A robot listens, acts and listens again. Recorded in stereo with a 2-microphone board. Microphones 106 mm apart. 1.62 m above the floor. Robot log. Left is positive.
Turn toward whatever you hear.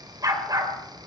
note: The dog barking: about 40° right or 140° right.
cmd yaw -40
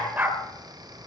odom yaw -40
note: So it is at 20° right.
cmd yaw -20
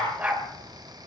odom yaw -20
note: The dog barking is now 15° right.
cmd yaw -15
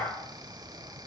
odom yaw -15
end: Found it: a dog barking, straight ahead.